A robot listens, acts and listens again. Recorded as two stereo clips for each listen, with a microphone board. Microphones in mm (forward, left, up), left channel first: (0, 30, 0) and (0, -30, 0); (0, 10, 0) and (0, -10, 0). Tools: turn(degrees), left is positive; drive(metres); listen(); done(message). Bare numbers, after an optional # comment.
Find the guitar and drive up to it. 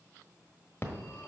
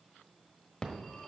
listen()
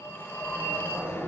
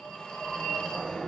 listen()
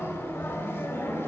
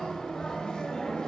done("I can't make out a guitar to turn to.")